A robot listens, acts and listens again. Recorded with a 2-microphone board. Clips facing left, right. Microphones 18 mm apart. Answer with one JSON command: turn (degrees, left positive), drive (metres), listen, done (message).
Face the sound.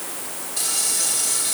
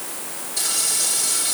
{"turn": 30}
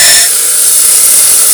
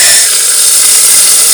{"turn": -25}
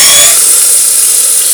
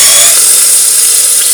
{"done": "Facing the frying."}